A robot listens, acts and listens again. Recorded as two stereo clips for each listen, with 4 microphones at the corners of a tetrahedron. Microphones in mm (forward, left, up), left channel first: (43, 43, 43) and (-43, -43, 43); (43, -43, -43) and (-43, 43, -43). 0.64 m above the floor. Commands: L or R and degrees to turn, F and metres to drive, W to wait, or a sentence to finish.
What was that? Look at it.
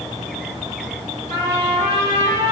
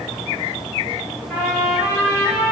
R120
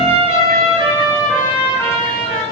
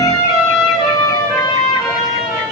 Facing the trumpet, 1 to 2 m away.